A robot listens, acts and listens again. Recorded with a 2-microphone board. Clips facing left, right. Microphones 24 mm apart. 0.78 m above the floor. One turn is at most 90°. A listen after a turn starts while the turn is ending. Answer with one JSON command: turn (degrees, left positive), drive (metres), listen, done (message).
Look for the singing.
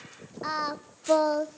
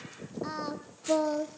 {"turn": 40}
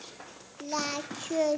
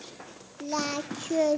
{"done": "Facing the singing."}